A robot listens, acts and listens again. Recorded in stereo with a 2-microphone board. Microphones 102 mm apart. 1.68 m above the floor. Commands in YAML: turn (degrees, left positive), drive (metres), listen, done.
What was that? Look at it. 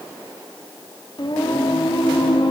turn: 60
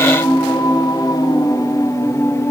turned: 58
turn: 30
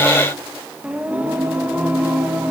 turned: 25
turn: -15
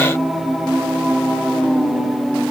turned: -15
done: "Facing the singing."